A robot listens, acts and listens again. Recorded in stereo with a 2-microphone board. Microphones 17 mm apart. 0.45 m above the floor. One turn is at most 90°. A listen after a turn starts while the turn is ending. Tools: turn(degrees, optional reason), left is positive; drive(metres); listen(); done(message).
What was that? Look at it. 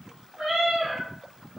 turn(degrees=-90)
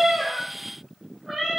done("Facing the cat meowing.")